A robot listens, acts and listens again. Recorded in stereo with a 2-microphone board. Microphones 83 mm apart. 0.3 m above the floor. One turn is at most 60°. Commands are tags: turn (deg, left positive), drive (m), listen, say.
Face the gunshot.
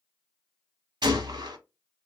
<turn deg="-60"/>
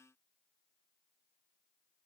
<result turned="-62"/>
<listen/>
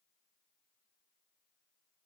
<say>I heard a gunshot, but can't make it out now. It was about 5° right or 50° right.</say>